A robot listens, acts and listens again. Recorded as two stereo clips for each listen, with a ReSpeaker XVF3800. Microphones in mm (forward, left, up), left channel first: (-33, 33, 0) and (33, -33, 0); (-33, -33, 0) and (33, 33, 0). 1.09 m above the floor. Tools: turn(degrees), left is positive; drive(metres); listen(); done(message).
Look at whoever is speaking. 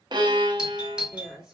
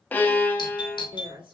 turn(degrees=40)
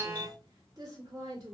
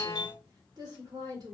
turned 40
done("Found it: a woman speaking, straight ahead.")